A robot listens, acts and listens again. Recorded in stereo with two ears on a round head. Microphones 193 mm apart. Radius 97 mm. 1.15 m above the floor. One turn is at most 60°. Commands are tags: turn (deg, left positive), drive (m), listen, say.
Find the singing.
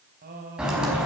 <turn deg="-50"/>
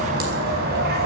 <listen/>
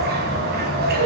<listen/>
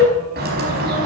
<say>I heard singing, but can't make it out now. It was about straight ahead or 80° right.</say>